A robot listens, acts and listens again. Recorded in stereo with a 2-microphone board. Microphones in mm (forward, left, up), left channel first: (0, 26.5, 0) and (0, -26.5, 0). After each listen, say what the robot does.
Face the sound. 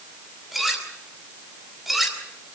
Turn 30° left.
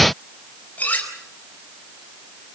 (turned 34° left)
Turn 150° left.
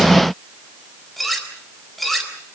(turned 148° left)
Facing the cutlery clinking.